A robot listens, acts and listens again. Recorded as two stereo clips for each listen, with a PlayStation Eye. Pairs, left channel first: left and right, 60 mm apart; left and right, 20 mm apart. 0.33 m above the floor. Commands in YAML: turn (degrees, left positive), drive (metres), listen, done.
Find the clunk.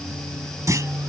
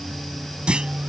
turn: -65
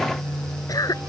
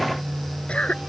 listen: true
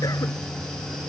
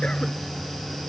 done: "I heard a clunk, but can't make it out now. It was about straight ahead or 50° right."